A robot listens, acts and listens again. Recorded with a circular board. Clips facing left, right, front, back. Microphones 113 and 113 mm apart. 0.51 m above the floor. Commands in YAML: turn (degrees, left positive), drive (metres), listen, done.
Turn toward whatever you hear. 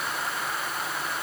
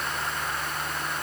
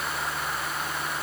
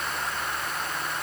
listen: true
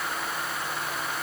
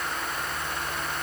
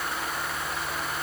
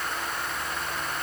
listen: true
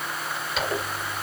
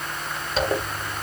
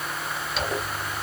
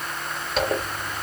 turn: -145
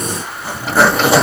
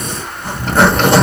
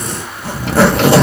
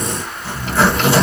done: "Facing the zipper, 1 to 2 m away."